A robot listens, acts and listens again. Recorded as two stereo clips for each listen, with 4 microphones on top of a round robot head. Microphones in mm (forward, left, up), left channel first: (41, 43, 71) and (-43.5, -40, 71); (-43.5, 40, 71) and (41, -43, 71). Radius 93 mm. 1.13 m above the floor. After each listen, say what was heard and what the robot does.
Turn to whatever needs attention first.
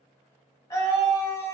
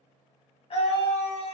The scream: 105° left. Turn 105° left.
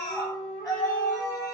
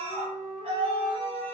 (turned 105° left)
The scream is now 15° right. Turn 15° right.
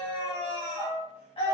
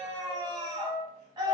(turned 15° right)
Facing the scream.